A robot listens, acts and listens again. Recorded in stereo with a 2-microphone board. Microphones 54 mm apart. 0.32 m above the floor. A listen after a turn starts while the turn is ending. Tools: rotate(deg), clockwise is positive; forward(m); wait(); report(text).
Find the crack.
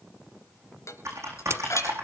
rotate(65)
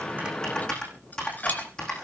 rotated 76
wait()
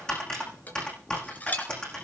report("I heard a crack, but can't make it out now. It was about 10° left or 40° right.")